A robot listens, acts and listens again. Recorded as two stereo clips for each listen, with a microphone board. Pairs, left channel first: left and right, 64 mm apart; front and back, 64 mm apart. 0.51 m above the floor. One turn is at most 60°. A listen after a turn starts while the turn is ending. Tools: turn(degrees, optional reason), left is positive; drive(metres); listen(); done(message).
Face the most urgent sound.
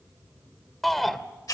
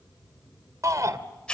turn(degrees=60, reason="The shout: 175° left.")
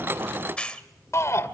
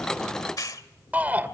turn(degrees=60, reason="The shout is now 120° left.")
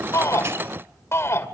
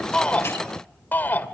turn(degrees=55, reason="The shout is now 55° left.")
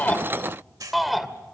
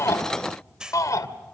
done("Facing the shout.")